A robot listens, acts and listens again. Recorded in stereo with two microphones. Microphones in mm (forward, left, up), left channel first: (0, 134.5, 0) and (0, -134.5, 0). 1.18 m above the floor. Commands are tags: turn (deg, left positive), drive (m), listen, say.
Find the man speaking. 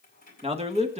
<turn deg="-25"/>
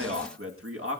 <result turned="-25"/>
<turn deg="-130"/>
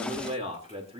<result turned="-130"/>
<turn deg="-20"/>
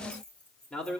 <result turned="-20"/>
<say>Facing the man speaking, 2 to 4 m away.</say>